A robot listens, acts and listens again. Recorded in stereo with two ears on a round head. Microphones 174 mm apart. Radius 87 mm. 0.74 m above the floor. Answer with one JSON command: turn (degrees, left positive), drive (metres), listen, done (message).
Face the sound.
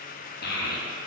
{"turn": 55}
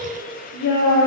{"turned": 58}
{"turn": 65}
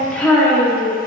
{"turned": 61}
{"done": "Found it: a child speaking, straight ahead, under 1 m away."}